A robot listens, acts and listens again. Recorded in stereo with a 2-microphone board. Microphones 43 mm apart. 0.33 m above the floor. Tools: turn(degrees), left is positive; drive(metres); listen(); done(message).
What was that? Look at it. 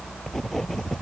turn(degrees=30)
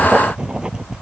turn(degrees=-20)
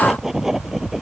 turn(degrees=-10)
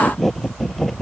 done("Found it: writing, straight ahead.")